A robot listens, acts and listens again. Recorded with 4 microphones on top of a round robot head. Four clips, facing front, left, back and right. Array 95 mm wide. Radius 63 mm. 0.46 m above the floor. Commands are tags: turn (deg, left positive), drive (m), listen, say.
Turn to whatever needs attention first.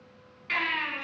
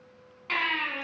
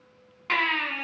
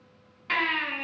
<turn deg="180"/>
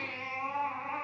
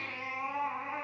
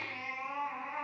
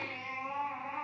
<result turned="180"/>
<turn deg="45"/>
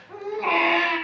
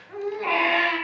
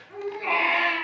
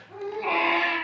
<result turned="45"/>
<say>Found it: a baby crying, straight ahead.</say>